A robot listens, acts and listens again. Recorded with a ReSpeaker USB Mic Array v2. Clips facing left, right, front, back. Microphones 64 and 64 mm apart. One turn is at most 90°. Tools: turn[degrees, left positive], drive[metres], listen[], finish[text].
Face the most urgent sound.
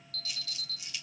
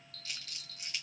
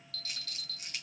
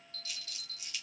Thought: The alarm: 120° left.
Action: turn[90]
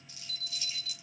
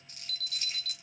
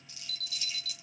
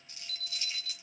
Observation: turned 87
Thought: The alarm is now 35° left.
Action: turn[35]
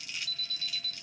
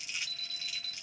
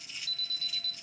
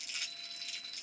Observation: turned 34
Action: finish[Found it: an alarm, straight ahead.]